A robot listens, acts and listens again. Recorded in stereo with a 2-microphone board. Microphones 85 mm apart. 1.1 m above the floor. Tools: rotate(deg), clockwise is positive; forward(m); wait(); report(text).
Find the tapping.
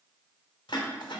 wait()
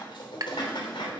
rotate(50)
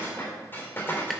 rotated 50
wait()
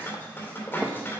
wait()
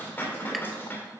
report("I heard tapping, but can't make it out now. It was about straight ahead or 80° right.")